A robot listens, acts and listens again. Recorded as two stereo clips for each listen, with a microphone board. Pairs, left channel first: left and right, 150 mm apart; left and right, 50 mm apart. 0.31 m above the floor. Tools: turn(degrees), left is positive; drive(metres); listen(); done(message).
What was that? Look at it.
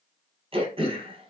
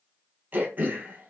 turn(degrees=-40)
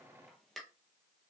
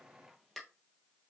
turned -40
done("Found it: throat clearing, straight ahead.")